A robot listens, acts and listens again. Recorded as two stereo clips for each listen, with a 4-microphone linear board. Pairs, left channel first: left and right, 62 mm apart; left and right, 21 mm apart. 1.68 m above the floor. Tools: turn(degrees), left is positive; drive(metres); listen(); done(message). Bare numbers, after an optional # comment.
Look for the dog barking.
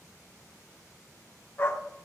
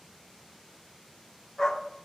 # The dog barking: about 35° left or 145° left.
turn(35)
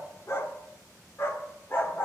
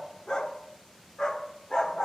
# The dog barking: about 40° left or 140° left.
turn(40)
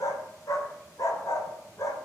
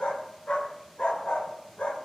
# So it is at 115° left.
turn(115)
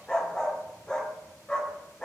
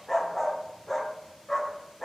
# The dog barking is now 10° left.
turn(10)
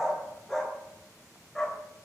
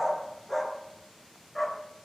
done("Facing the dog barking, 2 to 4 m away.")